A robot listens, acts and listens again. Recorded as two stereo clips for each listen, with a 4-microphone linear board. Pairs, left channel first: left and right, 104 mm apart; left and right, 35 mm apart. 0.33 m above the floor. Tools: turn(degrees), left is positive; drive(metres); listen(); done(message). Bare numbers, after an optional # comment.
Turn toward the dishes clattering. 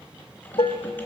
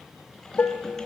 # The dishes clattering: about 55° left or 125° left.
turn(55)
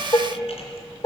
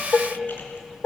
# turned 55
# So it is at 45° left.
turn(45)
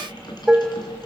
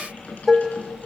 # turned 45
# The dishes clattering is now 10° right.
turn(-10)
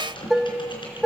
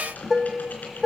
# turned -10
done("Found it: dishes clattering, straight ahead.")